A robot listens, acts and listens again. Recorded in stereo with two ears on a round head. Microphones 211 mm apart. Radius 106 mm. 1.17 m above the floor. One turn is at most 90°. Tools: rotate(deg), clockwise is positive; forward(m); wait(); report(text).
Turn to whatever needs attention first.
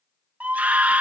rotate(30)
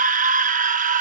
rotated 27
rotate(90)
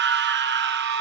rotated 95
rotate(50)
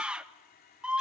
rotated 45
report("Facing the scream.")